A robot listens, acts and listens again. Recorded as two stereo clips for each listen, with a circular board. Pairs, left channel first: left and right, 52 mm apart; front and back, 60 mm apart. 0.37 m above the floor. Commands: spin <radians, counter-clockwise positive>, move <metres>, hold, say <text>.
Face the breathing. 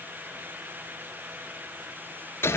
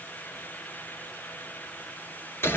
hold
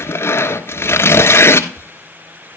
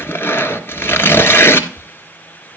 hold
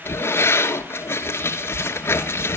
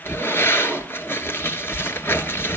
say I can't make out breathing, only tearing paper.